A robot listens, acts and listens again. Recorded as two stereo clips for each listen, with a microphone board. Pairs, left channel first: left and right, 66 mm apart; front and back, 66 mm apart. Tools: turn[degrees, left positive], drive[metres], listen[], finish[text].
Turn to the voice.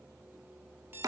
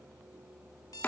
Action: listen[]
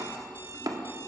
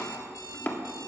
Action: listen[]
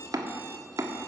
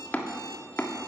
Action: finish[I can't make out anyone speaking to turn to.]